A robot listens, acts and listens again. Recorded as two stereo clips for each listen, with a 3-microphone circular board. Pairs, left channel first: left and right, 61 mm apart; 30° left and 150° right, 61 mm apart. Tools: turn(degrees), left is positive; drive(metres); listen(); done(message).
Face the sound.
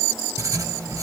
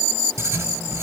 turn(degrees=-110)
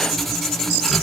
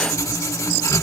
done("Facing the writing.")